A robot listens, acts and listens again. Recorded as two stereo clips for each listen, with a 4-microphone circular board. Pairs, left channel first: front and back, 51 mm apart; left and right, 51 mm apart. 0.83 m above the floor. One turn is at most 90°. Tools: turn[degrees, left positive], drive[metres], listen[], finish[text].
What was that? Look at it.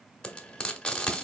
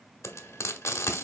Thought: The frying: 70° left.
Action: turn[70]
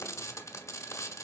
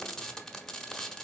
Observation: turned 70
Thought: The frying is now 10° left.
Action: turn[10]
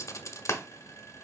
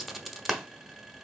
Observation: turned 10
Action: finish[Found it: frying, straight ahead, under 1 m away.]